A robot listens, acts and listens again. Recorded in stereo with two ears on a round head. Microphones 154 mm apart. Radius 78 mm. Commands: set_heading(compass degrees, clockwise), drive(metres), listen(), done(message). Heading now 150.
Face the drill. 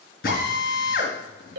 set_heading(95)
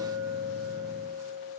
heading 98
listen()
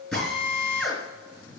done("Facing the drill.")